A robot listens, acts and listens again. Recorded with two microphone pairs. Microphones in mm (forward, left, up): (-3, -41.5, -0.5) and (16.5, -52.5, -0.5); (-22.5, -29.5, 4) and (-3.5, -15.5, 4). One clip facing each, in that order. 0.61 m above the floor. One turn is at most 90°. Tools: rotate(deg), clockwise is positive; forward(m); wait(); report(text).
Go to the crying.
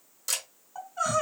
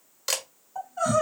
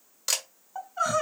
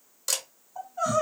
rotate(90)
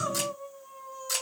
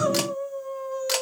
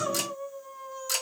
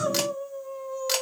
rotate(70)
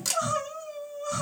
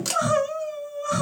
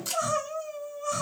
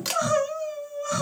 rotate(10)
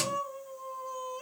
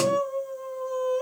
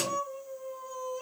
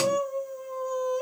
forward(1.0)
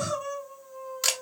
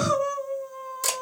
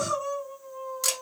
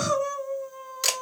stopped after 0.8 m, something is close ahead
report("Arrived at the crying, straight ahead.")